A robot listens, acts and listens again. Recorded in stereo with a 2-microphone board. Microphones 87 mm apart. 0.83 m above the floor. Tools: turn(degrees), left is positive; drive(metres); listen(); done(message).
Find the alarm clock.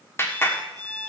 turn(degrees=-50)
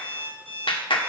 turn(degrees=-80)
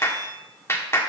listen()
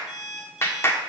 turn(degrees=-10)
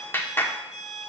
done("Facing the alarm clock, over 4 m away.")